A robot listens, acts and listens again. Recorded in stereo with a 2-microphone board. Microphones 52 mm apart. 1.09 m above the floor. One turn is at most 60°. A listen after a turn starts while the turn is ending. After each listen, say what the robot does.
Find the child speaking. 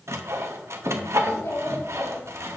Turn 60° left.
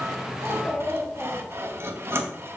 Turn 25° left.
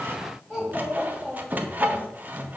Facing the child speaking, 2 to 4 m away.